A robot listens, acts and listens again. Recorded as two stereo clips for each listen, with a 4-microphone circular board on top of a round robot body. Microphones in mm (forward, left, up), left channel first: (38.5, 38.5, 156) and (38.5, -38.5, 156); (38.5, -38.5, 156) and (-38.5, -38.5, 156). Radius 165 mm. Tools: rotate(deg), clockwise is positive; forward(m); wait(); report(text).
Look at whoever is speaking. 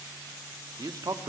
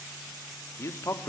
rotate(55)
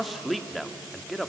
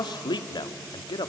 report("Facing the man speaking.")